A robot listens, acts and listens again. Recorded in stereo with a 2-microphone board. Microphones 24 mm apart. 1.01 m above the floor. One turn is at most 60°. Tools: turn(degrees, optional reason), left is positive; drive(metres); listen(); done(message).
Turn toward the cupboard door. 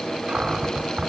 turn(degrees=-55, reason="The cupboard door: about 55° right or 125° right.")
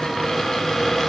done("Found it: a cupboard door, straight ahead, 2 to 4 m away.")